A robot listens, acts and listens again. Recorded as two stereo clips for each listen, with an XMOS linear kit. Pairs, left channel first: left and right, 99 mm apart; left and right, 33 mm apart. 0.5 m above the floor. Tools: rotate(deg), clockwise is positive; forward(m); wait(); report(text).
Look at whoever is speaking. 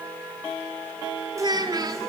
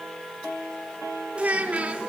rotate(40)
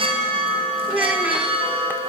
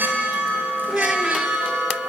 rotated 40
rotate(15)
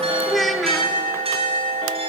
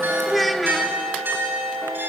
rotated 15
report("Facing the child speaking, under 1 m away.")